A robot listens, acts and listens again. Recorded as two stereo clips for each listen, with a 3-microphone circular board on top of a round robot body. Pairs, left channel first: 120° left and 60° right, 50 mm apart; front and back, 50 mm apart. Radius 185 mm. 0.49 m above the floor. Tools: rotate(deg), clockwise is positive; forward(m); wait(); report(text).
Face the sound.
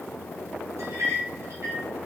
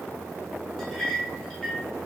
rotate(80)
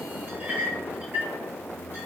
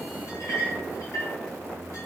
report("Found it: a clink, straight ahead, 1 to 2 m away.")